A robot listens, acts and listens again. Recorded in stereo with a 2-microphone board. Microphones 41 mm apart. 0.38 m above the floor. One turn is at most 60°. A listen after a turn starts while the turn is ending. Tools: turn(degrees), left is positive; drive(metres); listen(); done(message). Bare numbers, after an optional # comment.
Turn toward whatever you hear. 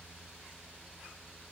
listen()
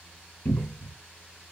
# The cupboard door: about 70° left or 110° left.
turn(60)
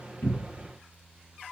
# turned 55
listen()
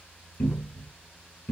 # So it is at 55° left.
turn(55)
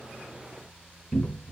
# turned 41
# The cupboard door is now 15° left.
turn(15)
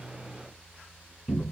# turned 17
done("Facing the cupboard door.")